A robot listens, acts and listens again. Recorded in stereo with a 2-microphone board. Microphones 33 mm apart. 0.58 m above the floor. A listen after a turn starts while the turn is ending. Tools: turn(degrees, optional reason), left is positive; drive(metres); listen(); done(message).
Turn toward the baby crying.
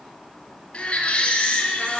turn(degrees=35, reason="The baby crying: about 35° left or 145° left.")
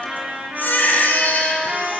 turn(degrees=110, reason="So it is at 110° left.")
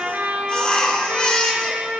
turn(degrees=30, reason="The baby crying is now 30° left.")
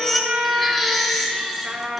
done("Facing the baby crying, 2 to 4 m away.")